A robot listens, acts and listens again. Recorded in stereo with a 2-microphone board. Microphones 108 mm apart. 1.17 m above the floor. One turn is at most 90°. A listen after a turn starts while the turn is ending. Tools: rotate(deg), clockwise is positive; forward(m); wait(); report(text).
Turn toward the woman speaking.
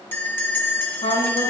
rotate(-90)
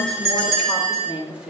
rotate(10)
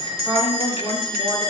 report("Found it: a woman speaking, straight ahead, 2 to 4 m away.")